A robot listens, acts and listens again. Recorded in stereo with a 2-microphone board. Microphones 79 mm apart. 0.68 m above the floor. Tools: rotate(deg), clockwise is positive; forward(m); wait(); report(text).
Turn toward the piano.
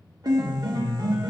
rotate(55)
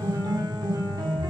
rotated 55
rotate(70)
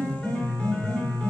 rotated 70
rotate(-15)
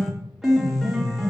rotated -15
report("Found it: a piano, straight ahead.")